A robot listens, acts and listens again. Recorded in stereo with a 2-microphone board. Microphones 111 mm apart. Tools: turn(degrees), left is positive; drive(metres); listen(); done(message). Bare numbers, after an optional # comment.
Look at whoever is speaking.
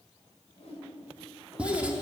# The child speaking: about 35° left or 145° left.
turn(35)
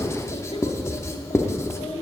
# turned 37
# So it is at 110° left.
turn(110)
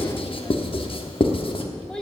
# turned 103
done("Facing the child speaking, 1 to 2 m away.")